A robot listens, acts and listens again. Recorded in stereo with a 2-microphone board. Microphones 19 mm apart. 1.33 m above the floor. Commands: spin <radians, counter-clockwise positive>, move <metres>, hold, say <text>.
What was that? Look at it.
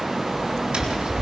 spin -0.96
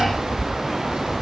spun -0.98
spin -1.13
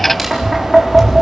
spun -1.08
say Found it: tapping, straight ahead, 2 to 4 m away.